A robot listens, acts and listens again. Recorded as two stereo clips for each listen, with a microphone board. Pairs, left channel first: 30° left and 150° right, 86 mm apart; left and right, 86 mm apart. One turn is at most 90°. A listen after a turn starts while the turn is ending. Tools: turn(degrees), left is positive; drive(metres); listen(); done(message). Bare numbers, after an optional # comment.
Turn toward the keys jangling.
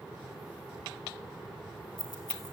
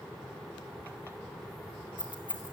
# The keys jangling: 65° left.
turn(65)
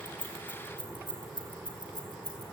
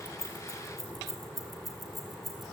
done("Found it: keys jangling, straight ahead.")